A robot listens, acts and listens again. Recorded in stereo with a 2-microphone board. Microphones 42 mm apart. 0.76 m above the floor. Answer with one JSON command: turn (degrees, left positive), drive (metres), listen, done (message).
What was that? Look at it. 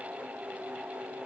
{"listen": true}
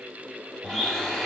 {"turn": 30}
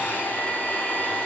{"turn": 150}
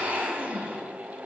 {"turn": -20}
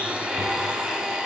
{"done": "Found it: a blender, straight ahead, 2 to 4 m away."}